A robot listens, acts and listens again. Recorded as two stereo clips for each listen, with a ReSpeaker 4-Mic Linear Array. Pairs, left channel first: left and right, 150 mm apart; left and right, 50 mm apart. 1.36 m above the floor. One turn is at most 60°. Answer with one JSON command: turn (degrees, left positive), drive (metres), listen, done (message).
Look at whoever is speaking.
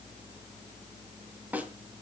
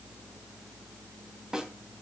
{"listen": true}
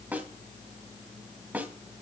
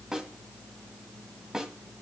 {"listen": true}
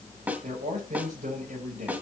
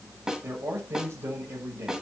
{"turn": -55}
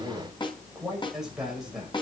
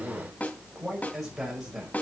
{"done": "Found it: a man speaking, straight ahead."}